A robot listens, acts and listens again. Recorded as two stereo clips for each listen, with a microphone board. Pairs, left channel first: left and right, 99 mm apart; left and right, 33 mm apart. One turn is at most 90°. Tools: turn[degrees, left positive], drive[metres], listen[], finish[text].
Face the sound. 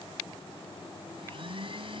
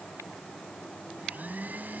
Thought: The blender: about 60° right or 120° right.
Action: turn[-60]
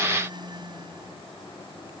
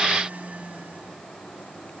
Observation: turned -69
Thought: So it is at 50° right.
Action: turn[-50]
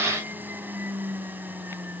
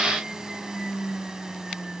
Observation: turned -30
Thought: The blender is now 20° right.
Action: turn[-20]
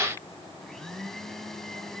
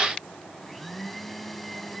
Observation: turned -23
Action: finish[Facing the blender.]